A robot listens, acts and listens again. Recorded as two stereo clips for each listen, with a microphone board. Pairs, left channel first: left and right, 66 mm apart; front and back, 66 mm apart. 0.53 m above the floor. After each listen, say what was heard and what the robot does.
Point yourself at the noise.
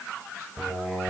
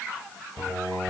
The singing: 10° right. Turn 10° right.
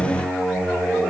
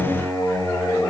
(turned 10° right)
Facing the singing, over 4 m away.